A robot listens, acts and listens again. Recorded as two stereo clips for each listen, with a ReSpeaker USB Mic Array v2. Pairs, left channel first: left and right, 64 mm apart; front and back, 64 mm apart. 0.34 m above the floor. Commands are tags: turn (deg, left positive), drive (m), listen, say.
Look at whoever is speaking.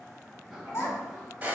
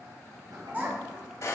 <turn deg="125"/>
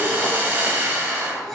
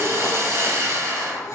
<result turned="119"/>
<listen/>
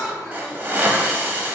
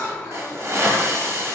<listen/>
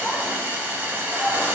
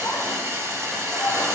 <say>Facing where the child speaking came from. I can't hear it now.</say>